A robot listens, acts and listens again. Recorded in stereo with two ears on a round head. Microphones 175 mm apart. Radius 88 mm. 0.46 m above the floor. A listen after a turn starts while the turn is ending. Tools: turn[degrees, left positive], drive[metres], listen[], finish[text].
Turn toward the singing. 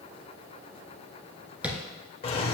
Action: listen[]
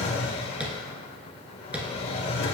Action: listen[]
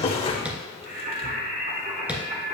Thought: The singing: about 35° right or 145° right.
Action: turn[-35]
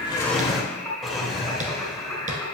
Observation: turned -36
Action: finish[Found it: singing, straight ahead.]